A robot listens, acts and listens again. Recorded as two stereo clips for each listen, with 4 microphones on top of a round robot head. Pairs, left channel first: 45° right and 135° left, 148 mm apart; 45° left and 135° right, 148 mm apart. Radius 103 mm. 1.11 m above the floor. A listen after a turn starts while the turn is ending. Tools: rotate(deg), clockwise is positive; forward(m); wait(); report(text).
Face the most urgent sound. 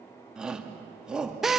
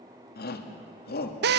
rotate(-50)
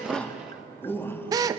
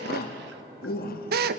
rotate(-30)
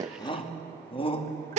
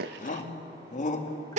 rotate(-10)
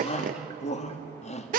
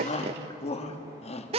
report("Found it: a shout, straight ahead, 2 to 4 m away.")